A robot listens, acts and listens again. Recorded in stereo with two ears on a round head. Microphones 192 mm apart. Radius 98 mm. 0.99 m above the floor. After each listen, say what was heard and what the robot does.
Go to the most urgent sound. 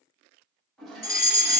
The fire alarm: about 45° left or 135° left. Turn 45° left.
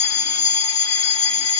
So it is at 80° left. Turn 80° left.
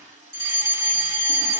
The fire alarm is now 20° right. Turn 20° right.
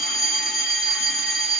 Drive 1.0 m forward.
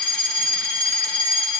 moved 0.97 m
Drive 1.0 m forward.
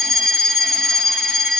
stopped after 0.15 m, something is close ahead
I am next to the fire alarm.